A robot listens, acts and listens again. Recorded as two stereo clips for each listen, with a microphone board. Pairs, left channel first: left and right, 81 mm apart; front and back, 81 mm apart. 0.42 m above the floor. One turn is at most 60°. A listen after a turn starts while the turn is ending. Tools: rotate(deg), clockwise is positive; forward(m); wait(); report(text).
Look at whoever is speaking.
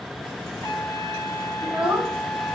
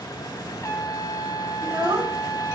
rotate(60)
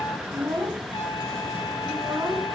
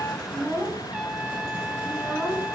rotate(60)
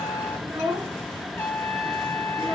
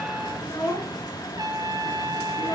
rotate(60)
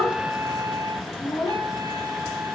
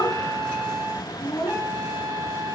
rotate(-25)
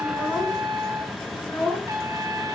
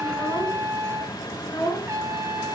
rotate(-15)
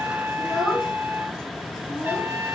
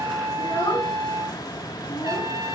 report("Facing the child speaking.")